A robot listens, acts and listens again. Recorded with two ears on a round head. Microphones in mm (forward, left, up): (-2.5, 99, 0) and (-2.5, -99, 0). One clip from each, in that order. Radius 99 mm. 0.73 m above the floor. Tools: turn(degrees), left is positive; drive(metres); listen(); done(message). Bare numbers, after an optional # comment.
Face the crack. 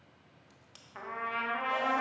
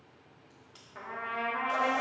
# The crack: about 35° left or 145° left.
turn(35)
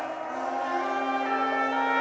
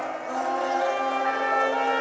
listen()
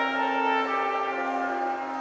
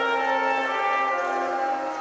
done("I heard a crack, but can't make it out now. It was about straight ahead or 110° left.")